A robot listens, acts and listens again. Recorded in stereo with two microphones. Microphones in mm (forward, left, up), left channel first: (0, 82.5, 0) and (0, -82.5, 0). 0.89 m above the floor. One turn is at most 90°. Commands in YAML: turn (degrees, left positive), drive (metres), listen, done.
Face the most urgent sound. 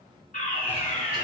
turn: 45
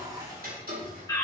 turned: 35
turn: 25
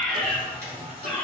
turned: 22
done: "Found it: a fire alarm, straight ahead."